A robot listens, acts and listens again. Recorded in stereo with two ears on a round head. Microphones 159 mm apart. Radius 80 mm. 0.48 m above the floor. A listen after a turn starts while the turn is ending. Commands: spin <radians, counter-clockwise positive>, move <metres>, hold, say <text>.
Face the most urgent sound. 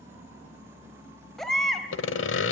spin 0.52
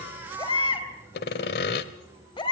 spin 2.62
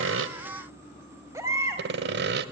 spin -0.26
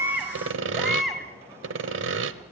say Facing the baby crying.